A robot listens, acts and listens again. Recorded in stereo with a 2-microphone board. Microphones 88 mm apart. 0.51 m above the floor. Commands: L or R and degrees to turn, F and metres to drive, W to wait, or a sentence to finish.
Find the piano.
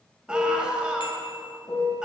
L50
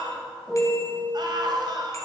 Facing the piano.